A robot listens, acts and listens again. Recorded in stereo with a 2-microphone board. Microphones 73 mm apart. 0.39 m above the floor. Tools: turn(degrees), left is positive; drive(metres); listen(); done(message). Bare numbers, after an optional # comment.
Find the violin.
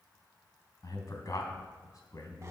listen()
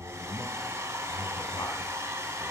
listen()
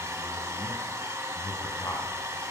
done("I can't make out a violin to turn to.")